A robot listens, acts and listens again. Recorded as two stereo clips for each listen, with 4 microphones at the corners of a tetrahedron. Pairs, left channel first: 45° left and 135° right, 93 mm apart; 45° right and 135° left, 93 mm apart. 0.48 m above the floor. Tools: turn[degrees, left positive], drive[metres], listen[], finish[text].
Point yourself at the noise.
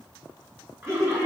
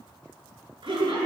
Thought: The laughter: 165° left.
Action: turn[165]
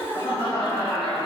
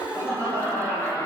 Thought: The laughter is now 25° left.
Action: turn[25]
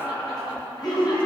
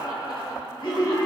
Action: finish[Facing the laughter, over 4 m away.]